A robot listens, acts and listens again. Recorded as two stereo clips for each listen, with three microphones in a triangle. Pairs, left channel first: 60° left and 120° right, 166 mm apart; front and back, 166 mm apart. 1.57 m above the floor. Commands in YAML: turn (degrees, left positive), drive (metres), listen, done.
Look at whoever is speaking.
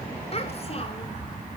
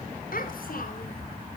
turn: 15
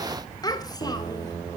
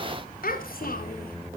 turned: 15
done: "Found it: a child speaking, straight ahead."